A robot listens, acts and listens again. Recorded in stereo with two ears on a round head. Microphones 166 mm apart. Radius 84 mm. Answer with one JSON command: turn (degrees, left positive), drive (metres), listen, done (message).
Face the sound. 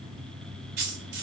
{"turn": -65}
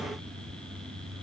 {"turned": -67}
{"listen": true}
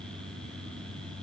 {"done": "I heard a dropped coin, but can't make it out now. It was about 5° left or 50° right."}